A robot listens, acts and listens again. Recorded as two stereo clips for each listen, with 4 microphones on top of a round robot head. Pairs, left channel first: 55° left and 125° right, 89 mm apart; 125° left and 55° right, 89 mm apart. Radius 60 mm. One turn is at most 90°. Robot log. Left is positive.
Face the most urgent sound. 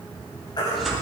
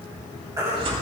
end: Facing the baby crying.